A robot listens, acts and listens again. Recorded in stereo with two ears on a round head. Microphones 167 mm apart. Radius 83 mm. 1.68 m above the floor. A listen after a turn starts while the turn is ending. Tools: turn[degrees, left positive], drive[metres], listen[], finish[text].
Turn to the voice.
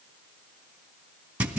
Action: listen[]
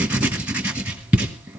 Action: listen[]
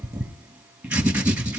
Action: finish[I can't make out anyone speaking, only writing.]